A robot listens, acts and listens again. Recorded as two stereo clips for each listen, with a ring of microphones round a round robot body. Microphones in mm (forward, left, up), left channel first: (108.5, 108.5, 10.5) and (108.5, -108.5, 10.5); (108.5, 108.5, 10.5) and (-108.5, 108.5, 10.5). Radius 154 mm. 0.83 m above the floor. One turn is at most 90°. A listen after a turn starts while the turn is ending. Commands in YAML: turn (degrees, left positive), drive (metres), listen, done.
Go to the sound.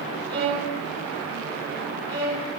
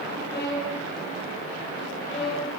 turn: -70
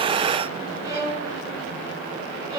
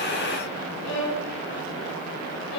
turn: -25
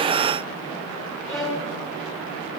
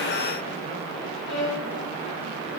drive: 1.0
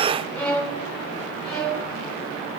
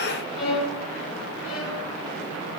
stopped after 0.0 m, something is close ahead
done: "Something is in my way. I am facing the violin but have not reached it."